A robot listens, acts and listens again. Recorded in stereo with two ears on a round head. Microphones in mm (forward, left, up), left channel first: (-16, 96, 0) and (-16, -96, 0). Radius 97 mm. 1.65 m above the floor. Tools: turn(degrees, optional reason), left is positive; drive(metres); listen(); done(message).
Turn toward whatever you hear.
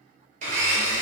turn(degrees=-35, reason="The blender: about 35° right or 145° right.")
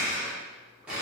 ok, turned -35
done("Facing the blender, under 1 m away.")